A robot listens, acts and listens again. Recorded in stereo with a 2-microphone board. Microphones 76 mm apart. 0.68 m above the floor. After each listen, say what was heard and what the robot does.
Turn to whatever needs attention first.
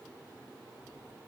Keep listening.
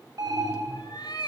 The alarm: about 55° right or 125° right. Turn 55° right.
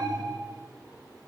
So it is at 65° right. Turn 65° right.
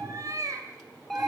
Facing the alarm, 2 to 4 m away.